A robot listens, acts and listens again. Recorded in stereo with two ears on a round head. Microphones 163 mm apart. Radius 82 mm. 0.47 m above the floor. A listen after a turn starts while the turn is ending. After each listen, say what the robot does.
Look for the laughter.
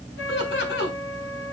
Turn 70° left.
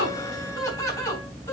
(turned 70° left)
Turn 15° left.
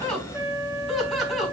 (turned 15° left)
Found it: laughter, straight ahead, over 4 m away.